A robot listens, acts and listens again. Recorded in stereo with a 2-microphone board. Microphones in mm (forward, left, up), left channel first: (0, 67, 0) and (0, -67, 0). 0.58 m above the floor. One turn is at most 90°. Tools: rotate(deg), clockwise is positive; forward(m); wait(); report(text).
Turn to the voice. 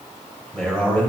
rotate(-30)
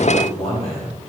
rotate(-90)
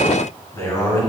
rotate(-20)
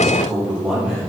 rotate(10)
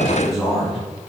report("Found it: a man speaking, straight ahead.")